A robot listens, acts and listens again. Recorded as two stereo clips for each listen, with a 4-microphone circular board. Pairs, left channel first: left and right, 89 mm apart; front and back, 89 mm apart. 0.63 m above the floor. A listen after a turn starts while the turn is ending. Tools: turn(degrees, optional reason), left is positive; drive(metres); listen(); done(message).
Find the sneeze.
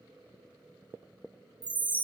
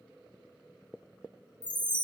listen()
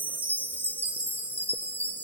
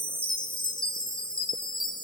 listen()
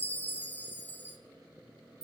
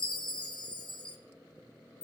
done("I can't make out a sneeze, only a chime.")